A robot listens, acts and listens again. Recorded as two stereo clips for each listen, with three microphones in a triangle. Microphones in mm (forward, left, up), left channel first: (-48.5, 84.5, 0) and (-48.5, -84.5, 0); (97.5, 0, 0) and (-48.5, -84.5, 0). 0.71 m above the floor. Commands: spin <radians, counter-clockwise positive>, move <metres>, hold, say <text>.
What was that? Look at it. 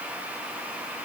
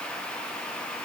hold
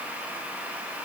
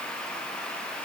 hold
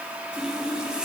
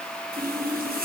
spin -3.05
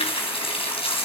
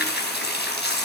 spin 0.61
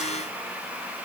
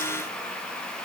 hold
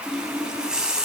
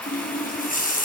say Facing the running tap, over 4 m away.